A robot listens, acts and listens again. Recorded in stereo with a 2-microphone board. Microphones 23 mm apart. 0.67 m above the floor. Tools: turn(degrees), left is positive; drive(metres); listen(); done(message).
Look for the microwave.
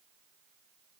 listen()
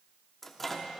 turn(degrees=30)
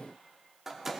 turn(degrees=-15)
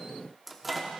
done("Found it: a microwave, straight ahead.")